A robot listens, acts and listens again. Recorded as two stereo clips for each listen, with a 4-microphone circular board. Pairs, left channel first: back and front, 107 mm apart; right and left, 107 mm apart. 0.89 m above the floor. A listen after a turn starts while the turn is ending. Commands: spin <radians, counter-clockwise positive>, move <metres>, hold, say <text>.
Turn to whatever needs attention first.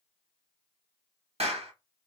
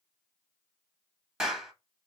hold
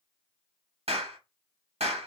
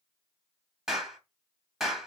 hold
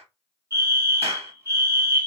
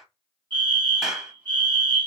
spin 1.05
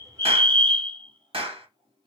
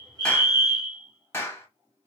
spin 0.52
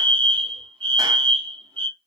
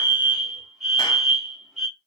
say Found it: a fire alarm, straight ahead, 2 to 4 m away.